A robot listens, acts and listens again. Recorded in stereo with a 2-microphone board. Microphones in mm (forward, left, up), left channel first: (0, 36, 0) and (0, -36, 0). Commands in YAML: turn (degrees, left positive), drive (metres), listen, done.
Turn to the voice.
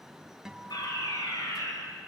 listen: true
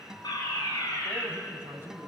turn: -35
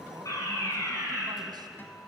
turn: -115
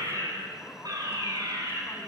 listen: true
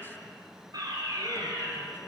listen: true
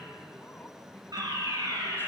turn: 25
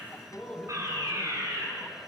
done: "Facing the man speaking, 2 to 4 m away."